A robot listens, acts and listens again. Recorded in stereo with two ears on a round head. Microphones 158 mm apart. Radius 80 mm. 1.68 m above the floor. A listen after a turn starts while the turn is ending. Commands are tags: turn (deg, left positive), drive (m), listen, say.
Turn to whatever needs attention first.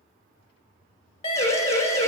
<turn deg="35"/>
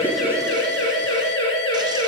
<turn deg="105"/>
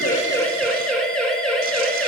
<say>Found it: a siren, straight ahead.</say>